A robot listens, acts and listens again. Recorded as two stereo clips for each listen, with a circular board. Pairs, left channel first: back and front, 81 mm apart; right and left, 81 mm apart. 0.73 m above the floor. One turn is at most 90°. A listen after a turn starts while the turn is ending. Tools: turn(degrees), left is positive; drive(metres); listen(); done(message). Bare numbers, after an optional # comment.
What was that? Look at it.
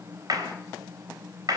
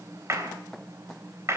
# The clap: 40° left.
turn(40)
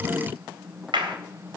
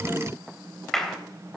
done("Found it: a clap, straight ahead, 2 to 4 m away.")